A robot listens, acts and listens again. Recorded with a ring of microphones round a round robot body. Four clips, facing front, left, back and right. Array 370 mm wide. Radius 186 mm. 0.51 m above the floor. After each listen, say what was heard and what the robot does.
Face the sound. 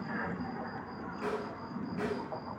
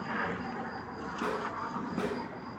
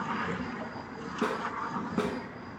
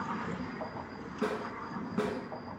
The snare drum: straight behind. Turn 180° left.
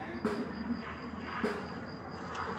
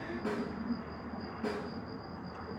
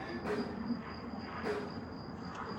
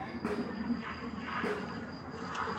The snare drum is now 35° right. Turn 35° right.
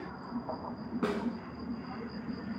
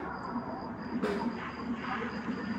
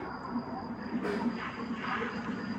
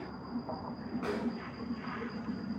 Found it: a snare drum, straight ahead, 1 to 2 m away.